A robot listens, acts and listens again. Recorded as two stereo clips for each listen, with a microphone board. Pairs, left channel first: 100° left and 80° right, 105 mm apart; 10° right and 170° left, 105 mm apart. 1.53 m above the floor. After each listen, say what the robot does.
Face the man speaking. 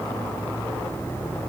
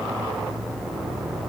Keep listening.
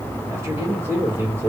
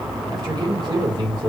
Turn 145° right.
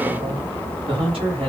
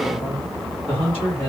Turn 50° right.
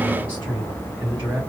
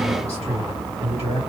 Turn 15° right.
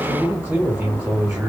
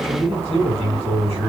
Found it: a man speaking, straight ahead, 2 to 4 m away.